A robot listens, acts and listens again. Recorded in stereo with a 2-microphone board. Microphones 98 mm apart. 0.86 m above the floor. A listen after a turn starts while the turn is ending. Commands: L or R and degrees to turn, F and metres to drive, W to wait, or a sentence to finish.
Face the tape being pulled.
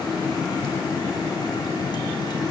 W
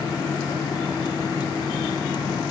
W
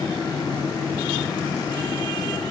I can't make out tape being pulled to turn to.